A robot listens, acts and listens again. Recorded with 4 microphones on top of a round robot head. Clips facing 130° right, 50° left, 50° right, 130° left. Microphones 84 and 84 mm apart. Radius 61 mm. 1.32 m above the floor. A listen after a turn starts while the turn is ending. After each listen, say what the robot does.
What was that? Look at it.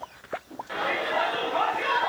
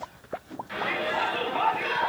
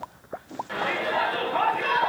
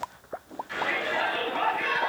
Turn 90° right.
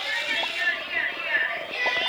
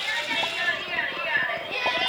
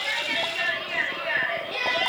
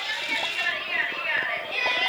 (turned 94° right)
Facing the shout, over 4 m away.